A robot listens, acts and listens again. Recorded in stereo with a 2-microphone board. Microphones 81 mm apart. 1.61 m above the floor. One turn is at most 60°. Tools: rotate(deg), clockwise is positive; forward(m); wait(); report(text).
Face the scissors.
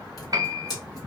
rotate(-50)
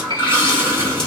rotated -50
wait()
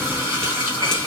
wait()
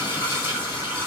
report("I heard scissors, but can't make it out now. It was about straight ahead or 80° left.")